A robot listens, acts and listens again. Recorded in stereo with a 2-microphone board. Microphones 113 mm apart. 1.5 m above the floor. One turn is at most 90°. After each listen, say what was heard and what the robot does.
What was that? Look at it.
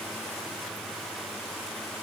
Keep listening.
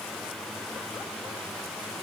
Keep listening.
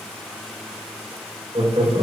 The laughter: about 55° right or 125° right. Turn 55° right.
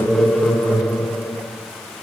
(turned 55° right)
So it is at 15° left. Turn 15° left.
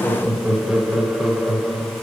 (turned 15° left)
Facing the laughter.